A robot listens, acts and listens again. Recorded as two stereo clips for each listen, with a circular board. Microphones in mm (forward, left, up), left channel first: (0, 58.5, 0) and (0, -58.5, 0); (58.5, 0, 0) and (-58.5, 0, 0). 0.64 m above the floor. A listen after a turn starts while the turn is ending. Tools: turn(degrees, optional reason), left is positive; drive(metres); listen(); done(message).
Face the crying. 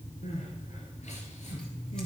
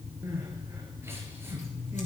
turn(degrees=110, reason="The crying: 110° left.")
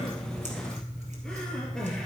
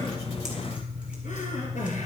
done("Facing the crying, 2 to 4 m away.")